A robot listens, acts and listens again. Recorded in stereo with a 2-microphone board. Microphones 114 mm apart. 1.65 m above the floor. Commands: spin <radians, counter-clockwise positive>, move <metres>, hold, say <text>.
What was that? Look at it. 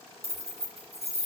spin -1.05
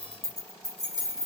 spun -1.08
spin -0.61
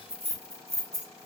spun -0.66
spin -0.52
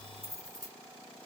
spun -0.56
spin -0.52
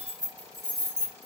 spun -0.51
spin -0.52
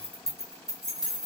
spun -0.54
say Facing the keys jangling, 1 to 2 m away.